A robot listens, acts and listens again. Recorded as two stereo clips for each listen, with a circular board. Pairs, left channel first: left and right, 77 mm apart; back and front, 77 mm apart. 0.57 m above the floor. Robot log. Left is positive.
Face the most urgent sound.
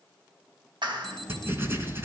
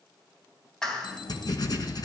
note: The alarm: 175° left.
cmd yaw +175
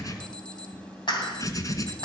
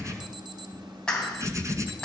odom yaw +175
note: The alarm is now 15° left.
cmd yaw +15
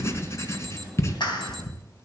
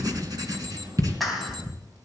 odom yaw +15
cmd idle
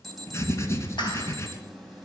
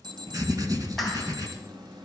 end: Found it: an alarm, straight ahead.